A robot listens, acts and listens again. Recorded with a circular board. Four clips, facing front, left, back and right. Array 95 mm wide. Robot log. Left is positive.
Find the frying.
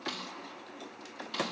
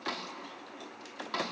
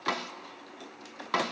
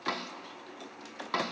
cmd idle
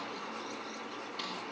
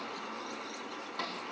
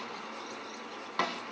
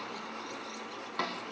cmd idle
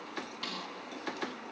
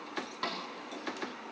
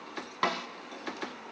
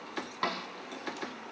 end: I can't make out frying to turn to.